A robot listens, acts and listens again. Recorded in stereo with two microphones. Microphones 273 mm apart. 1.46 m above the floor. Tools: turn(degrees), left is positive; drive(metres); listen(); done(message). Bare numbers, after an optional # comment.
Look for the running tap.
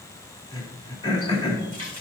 # The running tap: about 75° right or 105° right.
turn(-75)
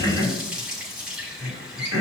done("Facing the running tap.")